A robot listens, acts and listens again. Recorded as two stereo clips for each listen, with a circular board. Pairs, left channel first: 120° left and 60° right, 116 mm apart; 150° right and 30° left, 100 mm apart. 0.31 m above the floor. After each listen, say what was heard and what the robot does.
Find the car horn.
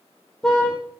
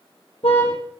The car horn: 155° right. Turn 155° right.
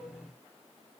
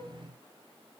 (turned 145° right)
Nothing new. It was at 10° right. Turn 10° right.
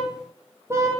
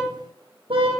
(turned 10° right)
Found it: a car horn, straight ahead, over 4 m away.